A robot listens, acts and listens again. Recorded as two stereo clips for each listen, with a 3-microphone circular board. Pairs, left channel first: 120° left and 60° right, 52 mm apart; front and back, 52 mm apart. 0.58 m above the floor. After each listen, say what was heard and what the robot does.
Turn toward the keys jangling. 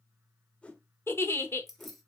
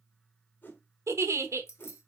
The keys jangling: 30° left. Turn 30° left.
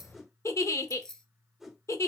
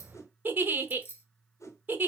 The keys jangling is now 45° left. Turn 45° left.
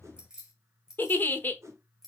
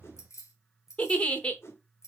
The keys jangling is now 25° left. Turn 25° left.
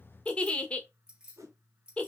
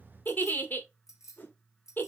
The keys jangling is now 10° left. Turn 10° left.
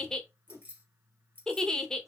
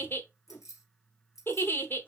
Found it: keys jangling, straight ahead.